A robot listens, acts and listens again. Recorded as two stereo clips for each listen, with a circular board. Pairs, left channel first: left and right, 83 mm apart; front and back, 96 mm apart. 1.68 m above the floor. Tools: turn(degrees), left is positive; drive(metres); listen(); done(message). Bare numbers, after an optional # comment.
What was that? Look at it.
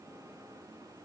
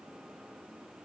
listen()
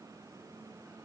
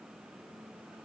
listen()
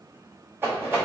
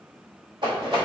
# The rattle: 150° right.
turn(-150)
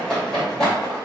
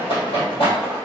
# The rattle is now 10° left.
turn(10)
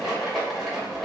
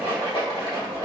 done("Found it: a rattle, straight ahead, 1 to 2 m away.")